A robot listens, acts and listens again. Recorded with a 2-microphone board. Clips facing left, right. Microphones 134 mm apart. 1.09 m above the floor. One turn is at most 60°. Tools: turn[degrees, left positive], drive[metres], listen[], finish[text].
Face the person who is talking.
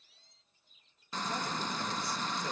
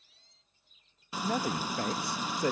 Thought: The man speaking: about 75° right or 105° right.
Action: turn[-60]
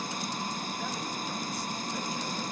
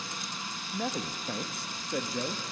Thought: So it is at 70° right.
Action: turn[-60]
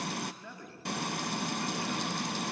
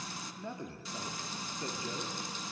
Thought: The man speaking is now 25° right.
Action: turn[-25]
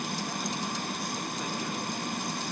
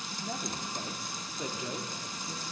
Action: listen[]
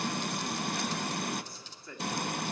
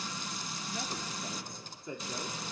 Thought: The man speaking is now 20° right.
Action: turn[-20]
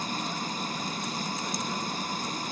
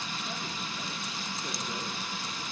Action: listen[]
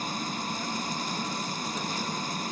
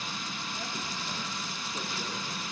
Action: listen[]
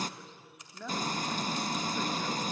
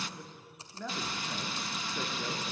Action: finish[Found it: a man speaking, straight ahead, 2 to 4 m away.]